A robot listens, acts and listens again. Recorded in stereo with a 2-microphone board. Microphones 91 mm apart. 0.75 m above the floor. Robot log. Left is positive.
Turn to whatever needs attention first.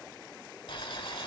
cmd idle
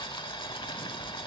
cmd idle
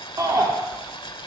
note: The shout: about 45° right or 135° right.
cmd yaw -45
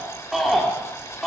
end: Found it: a shout, straight ahead.